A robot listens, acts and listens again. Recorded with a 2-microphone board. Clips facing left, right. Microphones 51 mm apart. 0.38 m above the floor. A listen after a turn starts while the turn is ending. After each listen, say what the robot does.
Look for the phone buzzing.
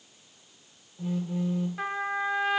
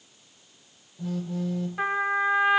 Turn 25° left.
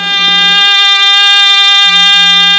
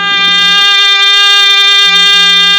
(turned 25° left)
Keep listening.
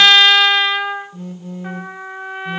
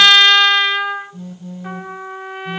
Turn 130° left.
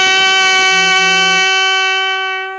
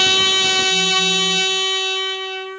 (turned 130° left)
Keep listening.
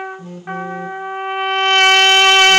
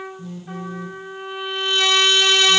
Turn 45° left.
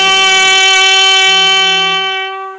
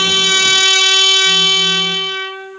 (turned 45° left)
Keep listening.
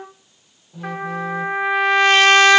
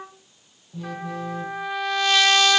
Found it: a phone buzzing, straight ahead.